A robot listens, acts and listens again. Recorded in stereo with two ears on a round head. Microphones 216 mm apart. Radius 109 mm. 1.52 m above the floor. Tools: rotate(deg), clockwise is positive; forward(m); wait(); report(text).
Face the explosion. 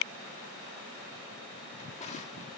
wait()
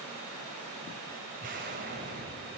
rotate(35)
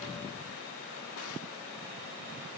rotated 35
wait()
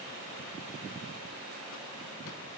report("I heard an explosion, but can't make it out now. It was about straight ahead or 110° right.")